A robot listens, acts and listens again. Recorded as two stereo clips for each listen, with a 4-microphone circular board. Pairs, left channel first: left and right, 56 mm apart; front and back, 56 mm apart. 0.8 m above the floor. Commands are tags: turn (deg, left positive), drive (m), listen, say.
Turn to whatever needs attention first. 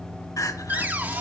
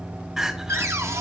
<turn deg="100"/>
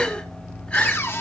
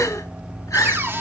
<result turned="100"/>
<turn deg="20"/>
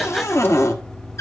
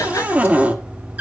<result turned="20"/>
<listen/>
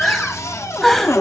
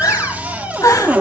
<say>Found it: crying, straight ahead.</say>